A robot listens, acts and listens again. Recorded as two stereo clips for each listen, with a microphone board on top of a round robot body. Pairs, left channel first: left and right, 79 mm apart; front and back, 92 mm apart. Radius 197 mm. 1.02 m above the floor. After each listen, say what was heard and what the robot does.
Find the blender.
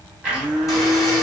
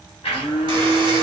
The blender: 10° right. Turn 10° right.
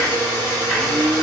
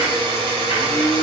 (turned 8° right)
Found it: a blender, straight ahead, under 1 m away.